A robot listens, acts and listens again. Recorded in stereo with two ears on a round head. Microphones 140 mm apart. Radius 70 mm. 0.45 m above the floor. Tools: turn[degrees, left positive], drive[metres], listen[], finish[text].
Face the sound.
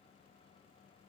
Action: listen[]
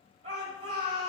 Thought: The shout: about 40° right or 140° right.
Action: turn[-40]
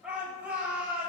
Thought: So it is at 10° right.
Action: turn[-10]
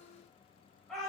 Action: finish[Facing the shout.]